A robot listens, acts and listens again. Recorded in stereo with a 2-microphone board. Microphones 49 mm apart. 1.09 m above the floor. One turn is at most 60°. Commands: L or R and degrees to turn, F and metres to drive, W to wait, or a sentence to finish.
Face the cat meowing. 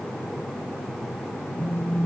W
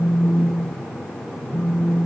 W
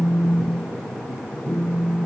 I can't make out a cat meowing to turn to.